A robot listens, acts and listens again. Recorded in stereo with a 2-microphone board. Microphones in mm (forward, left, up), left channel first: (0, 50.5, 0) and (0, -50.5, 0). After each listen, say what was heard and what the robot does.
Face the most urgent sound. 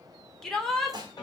Turn 30° left.
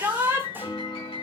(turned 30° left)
So it is at 25° right. Turn 25° right.
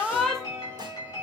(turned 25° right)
Found it: a shout, straight ahead.